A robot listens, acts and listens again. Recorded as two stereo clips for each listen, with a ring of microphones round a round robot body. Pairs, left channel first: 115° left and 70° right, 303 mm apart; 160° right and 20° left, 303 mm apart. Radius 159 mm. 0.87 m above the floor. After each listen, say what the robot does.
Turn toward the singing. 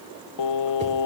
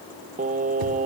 Turn 90° left.
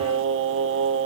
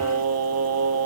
Turn 20° right.
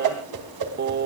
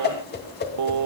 Turn 10° right.
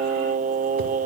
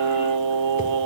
Found it: singing, straight ahead, under 1 m away.